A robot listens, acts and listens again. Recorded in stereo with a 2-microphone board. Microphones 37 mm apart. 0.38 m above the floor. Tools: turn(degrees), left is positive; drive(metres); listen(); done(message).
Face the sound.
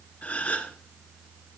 turn(degrees=40)
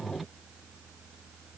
listen()
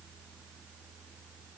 done("I heard a gasp, but can't make it out now. It was about straight ahead or 100° left.")